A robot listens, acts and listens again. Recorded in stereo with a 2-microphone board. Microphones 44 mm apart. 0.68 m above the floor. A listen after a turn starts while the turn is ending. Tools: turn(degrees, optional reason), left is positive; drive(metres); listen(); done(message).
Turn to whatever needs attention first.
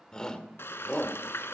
turn(degrees=20, reason="The shout: about 20° left or 160° left.")
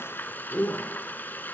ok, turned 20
turn(degrees=140, reason="So it is at 140° left.")
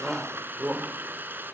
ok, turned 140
turn(degrees=-40, reason="The shout is now 40° right.")
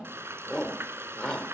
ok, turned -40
turn(degrees=15, reason="The shout is now 15° left.")
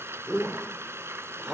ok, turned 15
done("Found it: a shout, straight ahead, 1 to 2 m away.")